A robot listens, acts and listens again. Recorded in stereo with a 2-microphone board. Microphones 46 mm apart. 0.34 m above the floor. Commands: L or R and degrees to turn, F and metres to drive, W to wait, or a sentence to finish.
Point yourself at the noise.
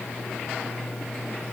W
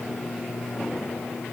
W
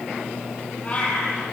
L30
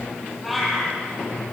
Found it: a cat meowing, straight ahead, over 4 m away.